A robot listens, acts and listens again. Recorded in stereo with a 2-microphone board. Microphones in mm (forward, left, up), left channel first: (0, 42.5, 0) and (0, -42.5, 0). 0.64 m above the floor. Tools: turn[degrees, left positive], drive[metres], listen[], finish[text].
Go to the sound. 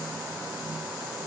Action: listen[]
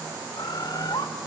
Thought: The bird: about 55° left or 125° left.
Action: turn[55]
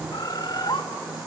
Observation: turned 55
Thought: So it is at 65° left.
Action: turn[65]
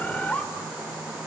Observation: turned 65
Thought: The bird is now 15° left.
Action: turn[15]
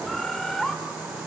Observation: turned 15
Action: drive[1.0]
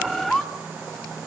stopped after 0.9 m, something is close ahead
Action: finish[Arrived at the bird, straight ahead.]